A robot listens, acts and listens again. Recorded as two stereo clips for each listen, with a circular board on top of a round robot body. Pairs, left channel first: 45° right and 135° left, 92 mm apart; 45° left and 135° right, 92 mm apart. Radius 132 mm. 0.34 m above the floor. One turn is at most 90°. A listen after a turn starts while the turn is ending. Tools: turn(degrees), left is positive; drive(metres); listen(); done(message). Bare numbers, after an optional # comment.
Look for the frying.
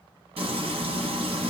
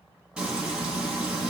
# The frying: 145° left.
turn(90)
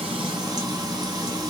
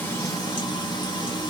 # The frying is now 85° left.
turn(85)
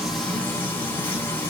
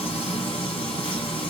# The frying is now 20° left.
turn(20)
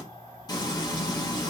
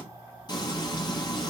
done("Facing the frying.")